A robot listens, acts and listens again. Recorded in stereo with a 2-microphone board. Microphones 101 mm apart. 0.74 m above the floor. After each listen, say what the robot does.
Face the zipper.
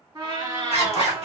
Turn 90° right.
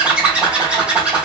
Turn 10° right.
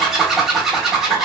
Found it: a zipper, straight ahead, 1 to 2 m away.